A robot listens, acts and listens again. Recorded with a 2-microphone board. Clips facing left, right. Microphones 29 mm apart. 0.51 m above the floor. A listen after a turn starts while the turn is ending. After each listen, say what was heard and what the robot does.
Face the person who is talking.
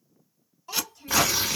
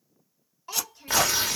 The child speaking: about 30° right or 150° right. Turn 30° right.
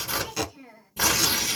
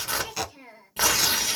So it is at 115° right. Turn 115° right.
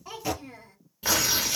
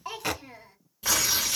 The child speaking is now 10° right. Turn 10° right.
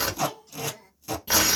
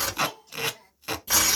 Facing the child speaking, 1 to 2 m away.